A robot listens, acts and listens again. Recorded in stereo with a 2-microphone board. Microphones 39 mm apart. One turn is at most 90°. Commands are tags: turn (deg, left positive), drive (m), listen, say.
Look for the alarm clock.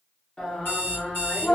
<turn deg="70"/>
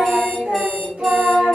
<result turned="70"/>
<listen/>
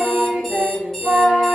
<turn deg="10"/>
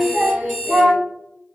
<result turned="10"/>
<say>Facing the alarm clock.</say>